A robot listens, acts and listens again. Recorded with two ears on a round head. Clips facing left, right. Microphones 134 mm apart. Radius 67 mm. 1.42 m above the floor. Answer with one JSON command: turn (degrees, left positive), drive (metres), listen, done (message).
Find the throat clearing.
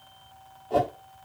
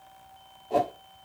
{"listen": true}
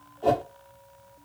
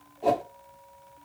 {"listen": true}
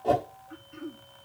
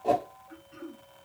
{"turn": -55}
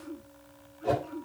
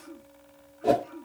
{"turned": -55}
{"done": "Found it: throat clearing, straight ahead, 2 to 4 m away."}